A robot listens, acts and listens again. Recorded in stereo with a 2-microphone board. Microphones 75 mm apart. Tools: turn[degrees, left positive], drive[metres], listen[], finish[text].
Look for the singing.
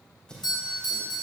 Action: turn[30]
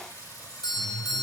Thought: So it is at 120° left.
Action: turn[120]
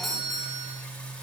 Thought: The singing is now 15° left.
Action: turn[15]
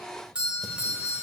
Action: listen[]
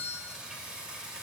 Thought: The singing is now 10° right.
Action: turn[-10]
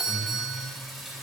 Action: finish[Facing the singing.]